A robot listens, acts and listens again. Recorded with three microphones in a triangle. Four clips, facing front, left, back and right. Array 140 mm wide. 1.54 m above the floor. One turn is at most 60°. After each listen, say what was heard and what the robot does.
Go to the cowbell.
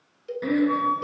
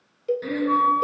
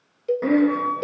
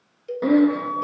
The cowbell: 150° left. Turn 60° left.
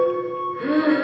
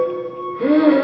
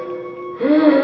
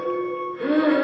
The cowbell is now 65° left. Turn 60° left.
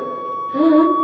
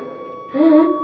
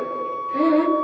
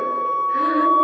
Keep listening.
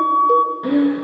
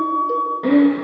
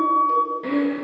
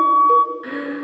Keep listening.
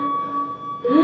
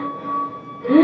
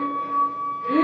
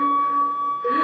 I heard a cowbell from this way, but can't make it out now. I did not reach it.